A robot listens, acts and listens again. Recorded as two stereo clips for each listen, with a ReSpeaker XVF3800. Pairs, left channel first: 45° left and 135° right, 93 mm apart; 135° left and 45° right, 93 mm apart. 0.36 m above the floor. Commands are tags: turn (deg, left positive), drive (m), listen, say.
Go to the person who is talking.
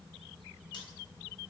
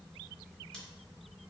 <listen/>
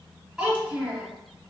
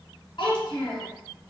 <turn deg="140"/>
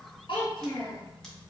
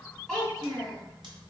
<turn deg="45"/>
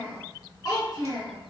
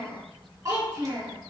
<drive m="1.0"/>
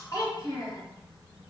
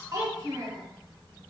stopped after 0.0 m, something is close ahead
<say>Something is in my way. I am facing the child speaking but have not reached it.</say>